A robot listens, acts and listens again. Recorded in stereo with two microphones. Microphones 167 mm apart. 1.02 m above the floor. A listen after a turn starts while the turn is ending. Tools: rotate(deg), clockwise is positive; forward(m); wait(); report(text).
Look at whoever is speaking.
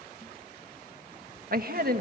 rotate(60)
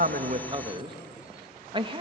rotate(35)
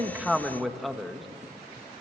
report("Facing the man speaking.")